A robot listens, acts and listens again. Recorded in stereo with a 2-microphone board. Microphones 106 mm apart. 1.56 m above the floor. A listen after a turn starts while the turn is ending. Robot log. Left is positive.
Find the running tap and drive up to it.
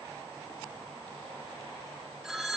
cmd idle
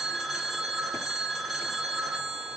cmd idle
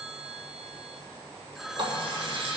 note: The running tap: about 50° right or 130° right.
cmd yaw -50
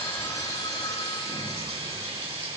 note: So it is at 80° right.
cmd yaw -80
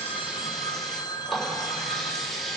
cmd fwd 1.0
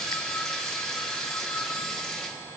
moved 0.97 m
cmd fwd 1.0
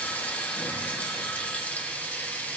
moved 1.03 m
note: The running tap is now 15° left.
cmd yaw +15
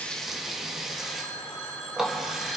cmd fwd 1.0
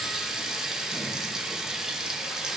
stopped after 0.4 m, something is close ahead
end: Arrived at the running tap, straight ahead.